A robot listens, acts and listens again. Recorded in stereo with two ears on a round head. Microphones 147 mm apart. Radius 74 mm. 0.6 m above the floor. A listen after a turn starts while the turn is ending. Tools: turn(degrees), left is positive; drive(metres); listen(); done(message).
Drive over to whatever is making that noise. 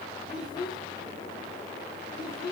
turn(degrees=25)
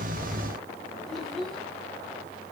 drive(metres=1.0)
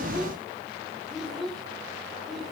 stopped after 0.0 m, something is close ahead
done("Something is in my way. I am facing the child speaking but have not reached it.")